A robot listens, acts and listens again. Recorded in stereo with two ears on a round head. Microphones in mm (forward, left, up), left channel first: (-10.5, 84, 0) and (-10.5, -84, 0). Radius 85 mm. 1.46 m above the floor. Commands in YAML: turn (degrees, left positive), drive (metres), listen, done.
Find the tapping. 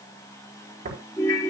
turn: -45
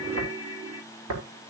turn: -90
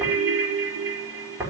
turn: -10
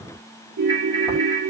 listen: true
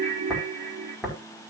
done: "Facing the tapping, over 4 m away."